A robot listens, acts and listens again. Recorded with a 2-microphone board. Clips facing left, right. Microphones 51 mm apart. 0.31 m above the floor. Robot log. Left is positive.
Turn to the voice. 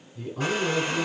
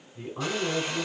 note: The man speaking: about 30° right or 150° right.
cmd yaw -30
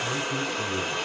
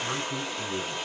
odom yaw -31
note: So it is at 115° right.
cmd yaw -115
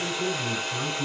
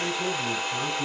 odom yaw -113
end: Found it: a man speaking, straight ahead, 2 to 4 m away.